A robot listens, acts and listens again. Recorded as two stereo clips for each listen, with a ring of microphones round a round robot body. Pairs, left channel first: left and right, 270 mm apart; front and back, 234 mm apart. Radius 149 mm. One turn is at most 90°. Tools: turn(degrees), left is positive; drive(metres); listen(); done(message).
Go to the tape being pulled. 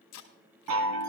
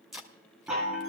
turn(degrees=90)
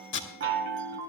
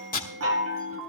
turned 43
turn(degrees=50)
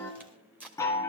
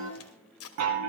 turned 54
drive(metres=1.0)
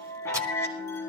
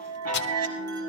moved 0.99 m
listen()
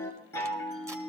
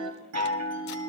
listen()
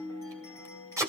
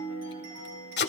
turn(degrees=-15)
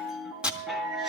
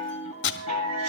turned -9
drive(metres=1.0)
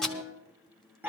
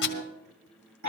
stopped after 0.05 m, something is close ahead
done("I am next to the tape being pulled.")